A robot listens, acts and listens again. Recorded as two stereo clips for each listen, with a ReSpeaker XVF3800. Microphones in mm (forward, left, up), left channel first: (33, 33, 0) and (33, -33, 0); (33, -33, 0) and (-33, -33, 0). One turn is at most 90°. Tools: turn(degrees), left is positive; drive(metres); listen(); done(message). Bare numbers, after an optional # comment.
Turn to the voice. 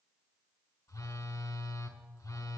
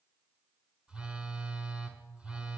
listen()
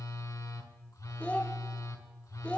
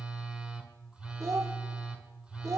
# The child speaking: 155° left.
turn(90)
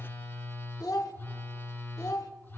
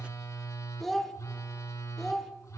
# The child speaking is now 85° left.
turn(85)
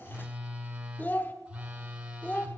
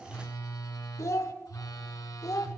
# The child speaking is now 30° left.
turn(30)
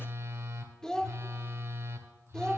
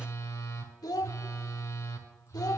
# The child speaking is now 10° left.
turn(10)
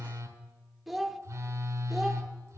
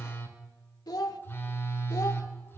done("Facing the child speaking, under 1 m away.")